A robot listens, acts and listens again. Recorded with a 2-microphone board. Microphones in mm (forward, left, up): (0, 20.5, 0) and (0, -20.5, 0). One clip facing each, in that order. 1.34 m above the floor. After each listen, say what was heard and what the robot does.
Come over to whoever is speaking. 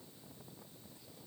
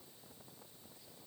Keep listening.
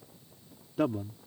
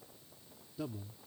The man speaking: about 60° left or 120° left. Turn 60° left.
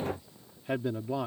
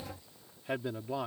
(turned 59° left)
Drive 1.0 m forward.
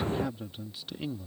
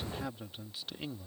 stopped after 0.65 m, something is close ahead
Something is in my way. I am facing the man speaking but have not reached it.